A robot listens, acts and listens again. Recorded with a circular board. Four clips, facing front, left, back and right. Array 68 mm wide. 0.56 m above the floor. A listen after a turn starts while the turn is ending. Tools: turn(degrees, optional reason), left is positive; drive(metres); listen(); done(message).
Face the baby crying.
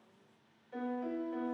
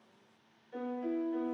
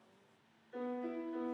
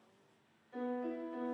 listen()
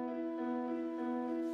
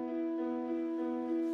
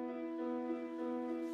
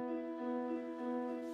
listen()
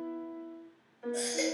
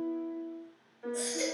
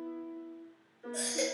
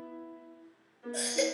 turn(degrees=-80, reason="The baby crying: 80° right.")
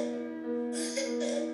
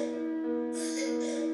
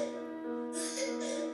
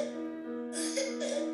turn(degrees=-35, reason="The baby crying is now 35° right.")
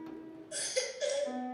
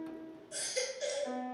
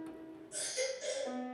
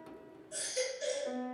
turn(degrees=25, reason="The baby crying is now 25° left.")
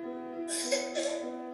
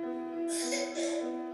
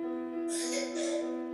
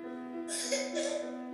done("Found it: a baby crying, straight ahead.")